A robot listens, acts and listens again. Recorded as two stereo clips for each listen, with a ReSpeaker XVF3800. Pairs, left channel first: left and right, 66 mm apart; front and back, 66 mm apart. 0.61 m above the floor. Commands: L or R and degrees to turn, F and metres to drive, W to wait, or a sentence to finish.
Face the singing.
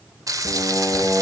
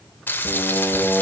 L115
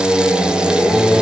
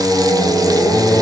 Found it: singing, straight ahead.